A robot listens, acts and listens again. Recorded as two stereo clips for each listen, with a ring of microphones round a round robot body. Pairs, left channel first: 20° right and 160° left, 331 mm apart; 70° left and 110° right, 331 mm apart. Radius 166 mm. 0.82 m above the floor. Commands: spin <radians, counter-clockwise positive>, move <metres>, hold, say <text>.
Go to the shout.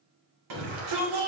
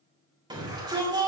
spin 2.97
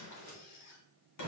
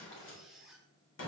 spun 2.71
spin 0.26
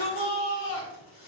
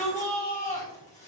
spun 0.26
move 1.0
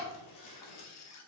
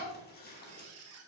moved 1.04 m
hold
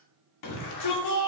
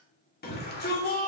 move 1.0
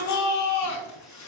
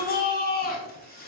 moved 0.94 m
spin 0.17
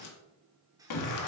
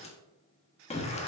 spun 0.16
move 1.0
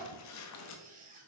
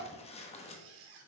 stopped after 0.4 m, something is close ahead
hold
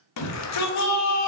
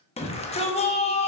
say Arrived at the shout, straight ahead.